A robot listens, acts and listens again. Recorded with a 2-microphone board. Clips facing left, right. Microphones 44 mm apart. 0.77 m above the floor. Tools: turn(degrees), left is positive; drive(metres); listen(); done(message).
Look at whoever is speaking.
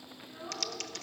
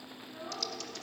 turn(degrees=30)
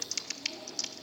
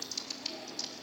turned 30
listen()
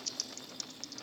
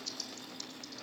listen()
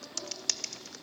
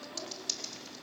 done("I heard a child speaking, but can't make it out now. It was about 25° right or 145° left.")